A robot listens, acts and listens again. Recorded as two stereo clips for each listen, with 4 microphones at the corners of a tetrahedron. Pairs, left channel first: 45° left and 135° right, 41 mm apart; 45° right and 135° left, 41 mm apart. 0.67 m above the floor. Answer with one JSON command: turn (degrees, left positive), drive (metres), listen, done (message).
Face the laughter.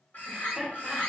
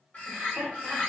{"turn": 130}
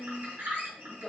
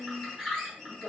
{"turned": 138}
{"turn": -50}
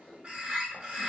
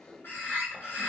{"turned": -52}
{"turn": -15}
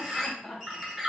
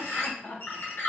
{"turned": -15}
{"turn": -20}
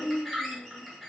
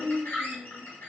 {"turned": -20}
{"turn": -10}
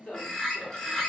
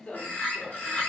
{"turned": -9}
{"done": "Facing the laughter."}